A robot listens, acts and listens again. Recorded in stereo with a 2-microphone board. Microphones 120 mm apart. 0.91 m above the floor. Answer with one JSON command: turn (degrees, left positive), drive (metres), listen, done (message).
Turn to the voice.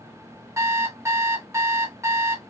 {"listen": true}
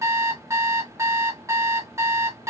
{"listen": true}
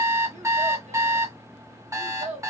{"turn": -75}
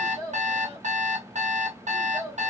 {"turn": -25}
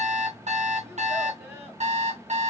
{"listen": true}
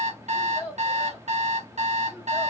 {"turn": -20}
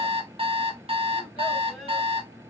{"listen": true}
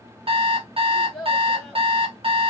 {"done": "Facing the child speaking, 1 to 2 m away."}